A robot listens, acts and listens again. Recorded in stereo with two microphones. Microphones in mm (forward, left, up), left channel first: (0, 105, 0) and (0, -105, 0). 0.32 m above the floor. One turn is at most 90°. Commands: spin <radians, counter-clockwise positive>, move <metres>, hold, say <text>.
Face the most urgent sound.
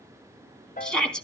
spin 0.52
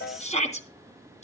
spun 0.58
spin 1.57
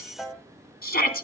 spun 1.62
spin 0.87
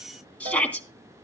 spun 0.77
say Facing the shout.